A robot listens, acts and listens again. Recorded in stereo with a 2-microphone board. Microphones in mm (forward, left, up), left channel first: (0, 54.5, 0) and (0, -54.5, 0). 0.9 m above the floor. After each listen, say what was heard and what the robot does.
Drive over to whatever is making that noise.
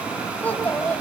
Turn 30° left.
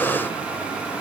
Keep listening.
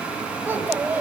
So it is at 20° right. Turn 20° right.
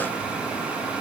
Keep listening.
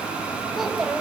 Drive 1.0 m forward.
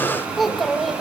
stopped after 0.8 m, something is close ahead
Blocked. The child speaking is further on, straight ahead.